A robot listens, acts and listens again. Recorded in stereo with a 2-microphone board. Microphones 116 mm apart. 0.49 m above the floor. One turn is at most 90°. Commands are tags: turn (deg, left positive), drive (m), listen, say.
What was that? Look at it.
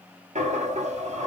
<turn deg="-75"/>
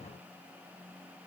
<listen/>
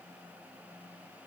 <say>I heard a dropped coin, but can't make it out now. It was about straight ahead or 30° right.</say>